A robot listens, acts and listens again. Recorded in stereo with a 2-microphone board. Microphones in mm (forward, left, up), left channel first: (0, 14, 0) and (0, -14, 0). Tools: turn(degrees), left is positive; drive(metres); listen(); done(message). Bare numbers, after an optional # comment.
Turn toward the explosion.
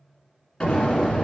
# The explosion: about 30° left or 150° left.
turn(30)
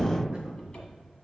done("Facing the explosion.")